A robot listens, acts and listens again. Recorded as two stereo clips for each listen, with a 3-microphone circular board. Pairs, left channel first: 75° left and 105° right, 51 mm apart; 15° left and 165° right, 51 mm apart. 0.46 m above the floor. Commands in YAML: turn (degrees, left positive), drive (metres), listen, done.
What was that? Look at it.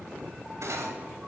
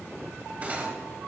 turn: -105
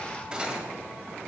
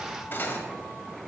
turn: -35
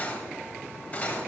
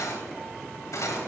turn: 15
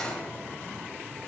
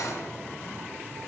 done: "Found it: cutlery clinking, straight ahead, 1 to 2 m away."